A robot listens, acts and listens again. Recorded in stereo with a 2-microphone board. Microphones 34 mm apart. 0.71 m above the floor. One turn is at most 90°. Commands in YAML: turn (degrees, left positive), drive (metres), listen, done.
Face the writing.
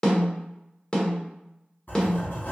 turn: 60
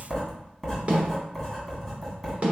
done: "Facing the writing, 1 to 2 m away."